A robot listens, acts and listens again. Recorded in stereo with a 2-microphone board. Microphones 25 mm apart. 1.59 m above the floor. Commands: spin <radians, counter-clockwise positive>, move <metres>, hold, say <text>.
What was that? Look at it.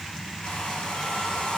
spin 1.22
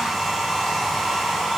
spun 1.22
say Facing the hair dryer, over 4 m away.